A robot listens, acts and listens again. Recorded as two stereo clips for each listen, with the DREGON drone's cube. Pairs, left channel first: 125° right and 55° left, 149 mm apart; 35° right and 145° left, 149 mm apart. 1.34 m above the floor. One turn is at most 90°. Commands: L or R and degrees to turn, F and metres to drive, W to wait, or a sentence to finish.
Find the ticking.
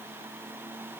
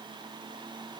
W
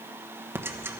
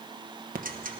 L90
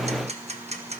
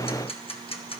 L15
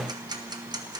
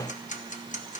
Found it: ticking, straight ahead.